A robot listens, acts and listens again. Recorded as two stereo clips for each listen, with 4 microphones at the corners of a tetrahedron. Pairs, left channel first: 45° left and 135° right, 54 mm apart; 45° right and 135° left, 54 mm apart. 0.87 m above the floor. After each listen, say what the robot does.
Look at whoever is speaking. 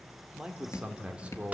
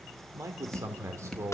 Turn 160° left.
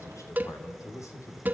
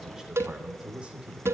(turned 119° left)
Turn 65° left.
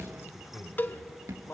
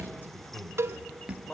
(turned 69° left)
Turn 15° left.
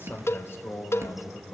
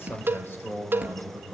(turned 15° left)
Found it: a man speaking, straight ahead.